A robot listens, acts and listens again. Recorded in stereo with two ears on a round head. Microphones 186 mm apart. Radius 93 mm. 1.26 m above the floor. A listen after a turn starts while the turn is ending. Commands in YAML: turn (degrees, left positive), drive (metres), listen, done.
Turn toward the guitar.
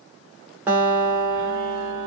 turn: -30
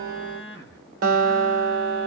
turn: -140
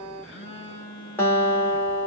turn: 10
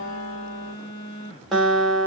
done: "Found it: a guitar, straight ahead."